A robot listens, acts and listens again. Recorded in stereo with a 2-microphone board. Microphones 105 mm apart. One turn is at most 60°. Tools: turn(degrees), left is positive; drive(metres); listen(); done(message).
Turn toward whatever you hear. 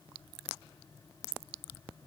listen()
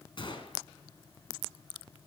turn(degrees=50)
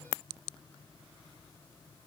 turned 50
listen()
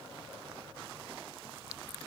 done("I heard a gunshot, but can't make it out now. It was about straight ahead or 80° left.")